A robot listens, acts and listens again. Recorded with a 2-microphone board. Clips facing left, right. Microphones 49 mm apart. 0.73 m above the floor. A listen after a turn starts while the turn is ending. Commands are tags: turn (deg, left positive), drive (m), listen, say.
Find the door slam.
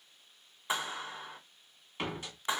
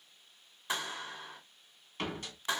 <turn deg="30"/>
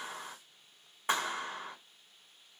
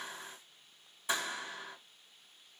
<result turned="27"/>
<listen/>
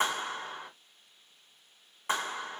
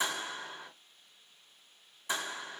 <say>I heard a door slam, but can't make it out now. It was about 15° right or 145° left.</say>